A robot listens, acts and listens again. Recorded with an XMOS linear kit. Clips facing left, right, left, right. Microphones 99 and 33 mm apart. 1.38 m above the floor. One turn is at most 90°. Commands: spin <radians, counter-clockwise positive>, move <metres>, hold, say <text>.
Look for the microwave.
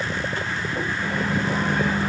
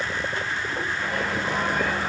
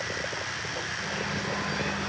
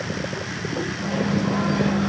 spin 0.52
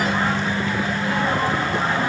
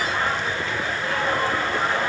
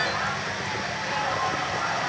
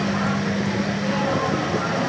spin 1.57
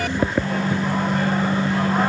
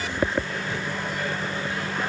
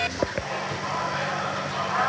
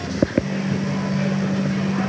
spin 1.13
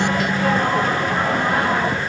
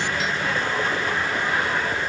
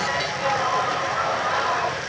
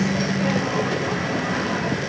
spin 0.79
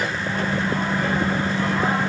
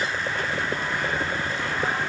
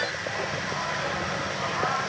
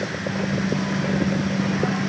spin 0.52
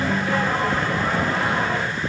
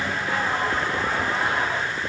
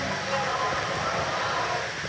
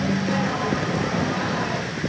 say Found it: a microwave, straight ahead.